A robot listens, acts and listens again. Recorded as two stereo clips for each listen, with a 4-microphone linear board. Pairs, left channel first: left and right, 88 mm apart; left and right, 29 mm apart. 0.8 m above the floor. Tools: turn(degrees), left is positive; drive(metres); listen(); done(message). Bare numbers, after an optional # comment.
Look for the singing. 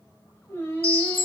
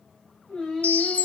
# The singing: about 25° left or 155° left.
turn(25)
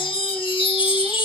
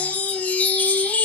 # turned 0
listen()
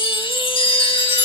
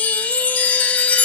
listen()
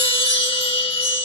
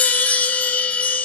done("I heard singing, but can't make it out now. It was about 25° left or 155° left.")